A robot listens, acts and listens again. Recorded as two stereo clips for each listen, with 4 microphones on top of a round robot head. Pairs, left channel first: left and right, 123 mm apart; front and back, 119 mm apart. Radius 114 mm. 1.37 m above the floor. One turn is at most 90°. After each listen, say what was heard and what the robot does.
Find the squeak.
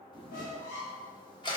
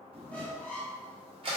The squeak: 80° left. Turn 80° left.
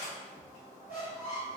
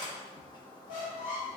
The squeak is now 15° right. Turn 15° right.
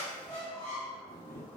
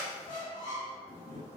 Found it: a squeak, straight ahead.